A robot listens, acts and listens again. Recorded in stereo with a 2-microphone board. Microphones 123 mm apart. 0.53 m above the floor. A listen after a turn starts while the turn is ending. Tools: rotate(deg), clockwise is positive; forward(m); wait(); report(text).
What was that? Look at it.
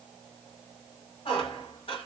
rotate(-50)
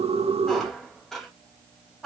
report("Found it: a squeak, straight ahead.")